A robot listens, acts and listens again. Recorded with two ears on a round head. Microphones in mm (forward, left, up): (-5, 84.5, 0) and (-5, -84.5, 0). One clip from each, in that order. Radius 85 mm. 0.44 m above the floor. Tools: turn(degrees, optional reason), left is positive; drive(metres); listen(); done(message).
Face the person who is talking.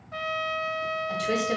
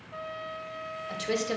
turn(degrees=-20, reason="The woman speaking: about 20° right or 160° right.")
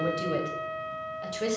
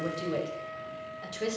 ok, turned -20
done("Found it: a woman speaking, straight ahead.")